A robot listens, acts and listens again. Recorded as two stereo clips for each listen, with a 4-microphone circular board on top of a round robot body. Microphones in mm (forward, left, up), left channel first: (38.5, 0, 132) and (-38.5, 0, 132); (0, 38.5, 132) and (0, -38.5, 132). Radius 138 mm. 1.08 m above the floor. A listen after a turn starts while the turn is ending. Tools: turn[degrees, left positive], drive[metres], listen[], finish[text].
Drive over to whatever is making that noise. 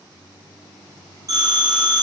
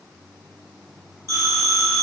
Thought: The phone ringing: 135° left.
Action: turn[135]
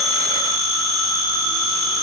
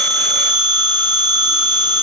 Thought: The phone ringing is now 25° left.
Action: turn[25]
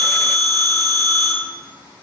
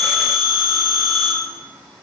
Thought: The phone ringing is now 10° left.
Action: turn[10]
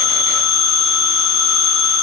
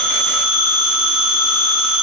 Action: drive[1.0]
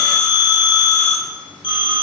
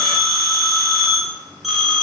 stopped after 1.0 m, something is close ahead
Action: finish[Arrived at the phone ringing, straight ahead.]